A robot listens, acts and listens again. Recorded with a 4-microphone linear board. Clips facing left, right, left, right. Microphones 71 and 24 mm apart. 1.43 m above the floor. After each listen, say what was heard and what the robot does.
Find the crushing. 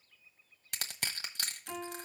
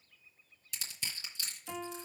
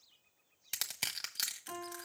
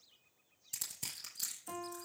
The crushing: about 60° left or 120° left. Turn 60° left.
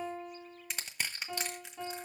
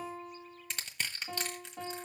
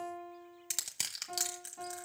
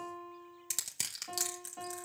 Found it: crushing, straight ahead.